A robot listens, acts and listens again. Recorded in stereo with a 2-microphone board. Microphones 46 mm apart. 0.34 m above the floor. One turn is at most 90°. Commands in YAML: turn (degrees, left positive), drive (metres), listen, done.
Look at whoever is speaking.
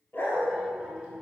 turn: -25
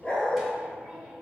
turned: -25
turn: -30
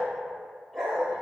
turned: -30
listen: true
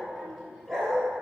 turn: 10
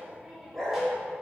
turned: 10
done: "Found it: a child speaking, straight ahead, 2 to 4 m away."